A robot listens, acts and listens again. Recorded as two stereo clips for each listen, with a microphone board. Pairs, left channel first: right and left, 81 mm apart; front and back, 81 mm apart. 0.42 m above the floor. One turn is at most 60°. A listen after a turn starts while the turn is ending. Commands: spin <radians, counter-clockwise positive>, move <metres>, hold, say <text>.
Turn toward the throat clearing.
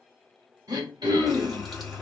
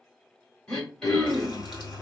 spin 1.05
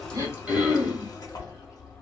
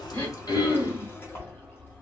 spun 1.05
spin 0.35
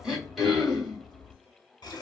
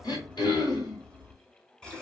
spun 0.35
say Found it: throat clearing, straight ahead, 1 to 2 m away.